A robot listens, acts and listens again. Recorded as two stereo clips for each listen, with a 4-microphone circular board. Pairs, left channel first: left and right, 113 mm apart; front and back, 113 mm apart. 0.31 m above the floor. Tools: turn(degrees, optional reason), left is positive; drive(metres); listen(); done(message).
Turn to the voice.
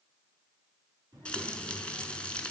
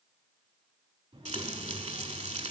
turn(degrees=-140, reason="The child speaking: 140° right.")
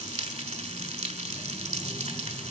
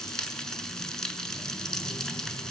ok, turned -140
listen()
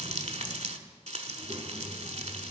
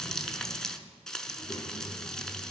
turn(degrees=-35, reason="The child speaking is now 35° right.")
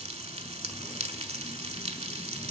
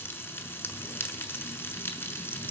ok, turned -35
listen()
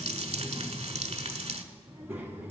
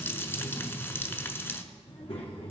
turn(degrees=-20, reason="The child speaking is now 20° right.")
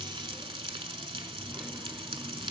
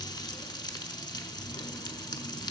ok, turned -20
done("Facing the child speaking.")